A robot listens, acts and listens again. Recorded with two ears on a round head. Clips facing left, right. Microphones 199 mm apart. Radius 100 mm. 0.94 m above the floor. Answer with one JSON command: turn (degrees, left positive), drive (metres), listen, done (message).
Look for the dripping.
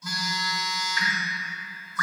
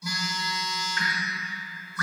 {"turn": 65}
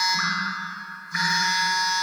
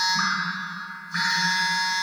{"turn": 10}
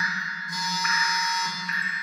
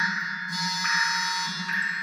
{"done": "Facing the dripping."}